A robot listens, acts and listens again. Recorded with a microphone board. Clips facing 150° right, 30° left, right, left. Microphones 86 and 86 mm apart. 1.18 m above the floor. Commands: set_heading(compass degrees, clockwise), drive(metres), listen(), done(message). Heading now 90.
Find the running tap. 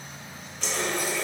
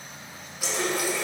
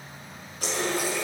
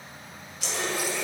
set_heading(140)
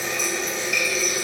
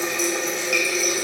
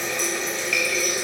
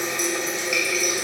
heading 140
set_heading(125)
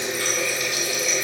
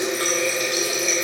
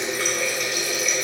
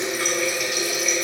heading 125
done("Facing the running tap.")